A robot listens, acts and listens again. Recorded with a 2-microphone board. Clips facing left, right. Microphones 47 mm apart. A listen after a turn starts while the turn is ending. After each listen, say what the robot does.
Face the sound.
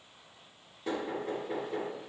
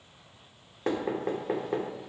Turn 60° right.
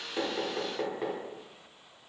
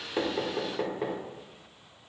Found it: knocking, straight ahead, under 1 m away.